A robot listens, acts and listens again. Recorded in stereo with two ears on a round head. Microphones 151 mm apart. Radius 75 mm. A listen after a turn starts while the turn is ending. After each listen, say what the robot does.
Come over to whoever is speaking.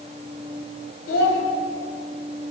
Turn 90° left.
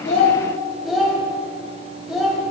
Drive 1.0 m forward.
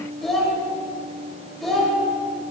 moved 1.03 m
Drive 1.0 m forward.
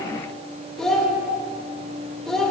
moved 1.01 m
Drive 1.0 m forward.
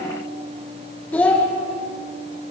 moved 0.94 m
Turn 10° left.
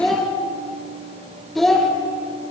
Drive 1.0 m forward.
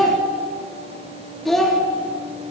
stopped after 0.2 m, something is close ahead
I am next to the child speaking.